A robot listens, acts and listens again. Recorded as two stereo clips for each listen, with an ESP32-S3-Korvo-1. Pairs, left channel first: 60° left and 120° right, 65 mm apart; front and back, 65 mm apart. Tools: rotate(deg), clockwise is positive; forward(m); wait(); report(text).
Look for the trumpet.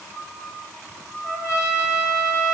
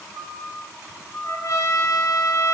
rotate(-20)
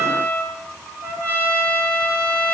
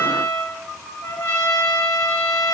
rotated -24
report("Found it: a trumpet, straight ahead.")